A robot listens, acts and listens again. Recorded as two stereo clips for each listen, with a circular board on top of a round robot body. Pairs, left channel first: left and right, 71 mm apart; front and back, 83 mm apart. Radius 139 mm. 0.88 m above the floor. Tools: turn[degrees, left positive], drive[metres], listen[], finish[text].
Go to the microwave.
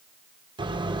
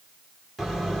Thought: The microwave: 95° right.
Action: turn[-95]
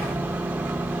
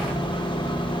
Thought: The microwave is now 25° right.
Action: turn[-25]
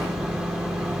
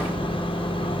Thought: The microwave is now 10° right.
Action: turn[-10]
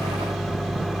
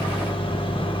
Action: drive[1.0]
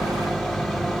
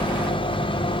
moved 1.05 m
Action: drive[1.0]
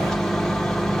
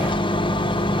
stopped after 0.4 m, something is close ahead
Action: finish[I am next to the microwave.]